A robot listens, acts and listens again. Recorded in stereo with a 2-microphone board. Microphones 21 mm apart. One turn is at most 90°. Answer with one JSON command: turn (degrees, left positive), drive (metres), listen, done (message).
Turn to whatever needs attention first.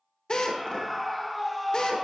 {"turn": 30}
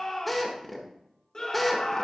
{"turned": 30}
{"turn": 90}
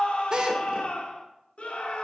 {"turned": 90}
{"turn": 90}
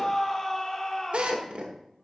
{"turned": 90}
{"turn": 25}
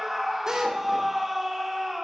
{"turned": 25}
{"turn": -10}
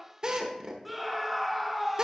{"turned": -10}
{"done": "Facing the scream, 1 to 2 m away."}